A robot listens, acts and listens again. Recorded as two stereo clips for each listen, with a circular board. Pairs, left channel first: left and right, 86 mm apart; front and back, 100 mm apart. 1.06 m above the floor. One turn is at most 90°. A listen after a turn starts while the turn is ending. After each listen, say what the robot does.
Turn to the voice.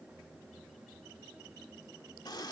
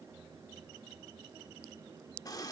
Keep listening.
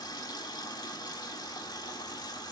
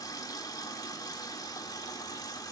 Keep listening.
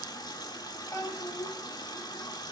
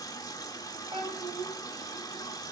Turn 90° left.
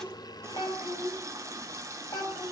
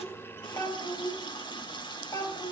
Turn 55° left.
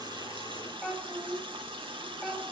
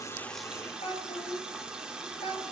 Found it: a child speaking, straight ahead, over 4 m away.